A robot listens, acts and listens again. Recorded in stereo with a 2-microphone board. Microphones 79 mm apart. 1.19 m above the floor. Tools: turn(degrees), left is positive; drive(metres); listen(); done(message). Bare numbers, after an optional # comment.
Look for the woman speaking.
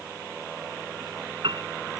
listen()
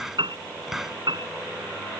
listen()
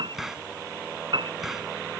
done("I can't make out a woman speaking to turn to.")